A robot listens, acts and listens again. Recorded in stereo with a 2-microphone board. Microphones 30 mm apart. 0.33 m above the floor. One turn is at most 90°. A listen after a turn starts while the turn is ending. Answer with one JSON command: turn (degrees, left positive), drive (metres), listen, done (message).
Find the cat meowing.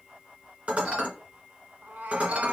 {"turn": -65}
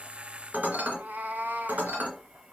{"turn": -80}
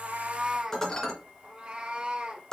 {"turn": -40}
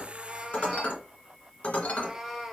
{"done": "Facing the cat meowing."}